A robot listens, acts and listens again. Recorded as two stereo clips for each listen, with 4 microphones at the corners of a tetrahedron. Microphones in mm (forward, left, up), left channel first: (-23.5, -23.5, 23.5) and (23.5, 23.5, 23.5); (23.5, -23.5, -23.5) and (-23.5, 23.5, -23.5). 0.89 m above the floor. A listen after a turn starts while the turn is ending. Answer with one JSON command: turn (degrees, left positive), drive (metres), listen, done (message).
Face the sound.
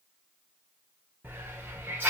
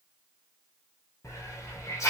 {"turn": -15}
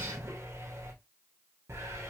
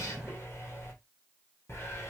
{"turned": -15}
{"done": "Found it: a hiss, straight ahead, 1 to 2 m away."}